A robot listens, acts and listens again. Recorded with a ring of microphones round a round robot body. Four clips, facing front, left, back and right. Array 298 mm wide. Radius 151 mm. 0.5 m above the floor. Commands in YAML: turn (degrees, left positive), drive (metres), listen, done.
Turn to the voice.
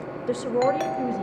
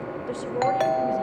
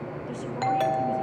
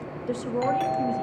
done: "Found it: a woman speaking, straight ahead."